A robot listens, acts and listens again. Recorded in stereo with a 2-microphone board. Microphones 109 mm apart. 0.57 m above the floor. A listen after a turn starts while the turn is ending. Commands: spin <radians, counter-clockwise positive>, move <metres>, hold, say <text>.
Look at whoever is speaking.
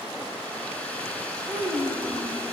spin -0.79
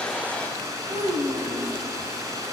spin -1.57
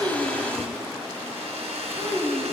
spin -0.44
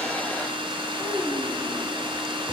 say Found it: a child speaking, straight ahead.